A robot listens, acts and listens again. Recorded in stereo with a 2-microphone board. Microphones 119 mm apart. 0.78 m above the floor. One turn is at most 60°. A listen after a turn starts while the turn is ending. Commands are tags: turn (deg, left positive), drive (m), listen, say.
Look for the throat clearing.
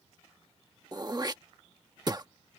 <turn deg="-35"/>
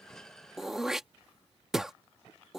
<say>Found it: throat clearing, straight ahead.</say>